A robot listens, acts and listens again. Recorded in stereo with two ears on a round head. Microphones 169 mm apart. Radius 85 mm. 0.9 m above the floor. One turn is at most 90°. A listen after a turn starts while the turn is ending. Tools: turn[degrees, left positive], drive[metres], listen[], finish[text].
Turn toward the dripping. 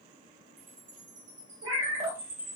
Thought: The dripping: about 30° right or 150° right.
Action: turn[-30]
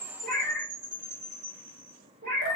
Action: listen[]
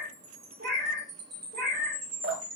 Thought: So it is at 115° right.
Action: turn[-90]
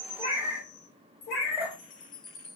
Thought: The dripping is now 10° right.
Action: turn[-10]
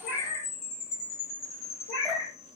Action: listen[]
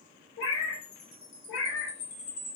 Action: listen[]
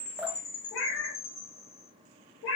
Action: finish[Found it: dripping, straight ahead, 1 to 2 m away.]